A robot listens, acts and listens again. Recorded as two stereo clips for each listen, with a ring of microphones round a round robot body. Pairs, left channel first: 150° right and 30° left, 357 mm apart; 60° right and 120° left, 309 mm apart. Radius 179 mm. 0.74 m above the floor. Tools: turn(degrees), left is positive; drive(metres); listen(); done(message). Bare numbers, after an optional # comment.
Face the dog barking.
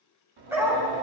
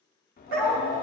# The dog barking: 115° left.
turn(115)
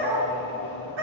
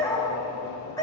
# The dog barking is now 20° left.
turn(20)
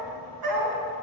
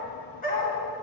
done("Found it: a dog barking, straight ahead.")